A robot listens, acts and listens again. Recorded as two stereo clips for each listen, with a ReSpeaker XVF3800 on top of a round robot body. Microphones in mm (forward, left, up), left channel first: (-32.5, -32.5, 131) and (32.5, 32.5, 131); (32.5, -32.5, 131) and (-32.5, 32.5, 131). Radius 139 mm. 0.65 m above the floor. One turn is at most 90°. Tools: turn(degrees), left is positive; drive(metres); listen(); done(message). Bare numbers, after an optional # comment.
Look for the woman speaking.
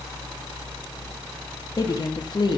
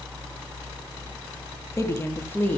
# The woman speaking: 115° right.
turn(-90)
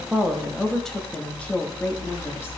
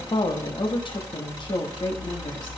# The woman speaking is now 65° right.
turn(-65)
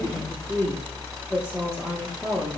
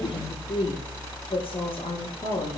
# The woman speaking is now 40° right.
turn(-40)
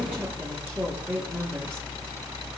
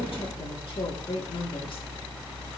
# The woman speaking is now 30° right.
turn(-30)
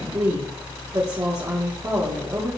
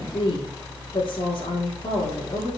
# The woman speaking is now 10° right.
turn(-10)
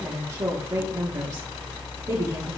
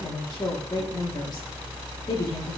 done("Found it: a woman speaking, straight ahead.")